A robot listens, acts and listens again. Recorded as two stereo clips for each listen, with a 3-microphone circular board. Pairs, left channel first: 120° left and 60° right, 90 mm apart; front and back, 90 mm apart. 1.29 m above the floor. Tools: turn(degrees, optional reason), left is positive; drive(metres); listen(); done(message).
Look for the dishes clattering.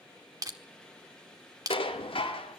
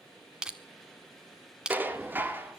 turn(degrees=115, reason="The dishes clattering: 115° left.")
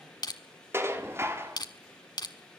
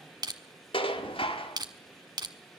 done("Facing the dishes clattering, 1 to 2 m away.")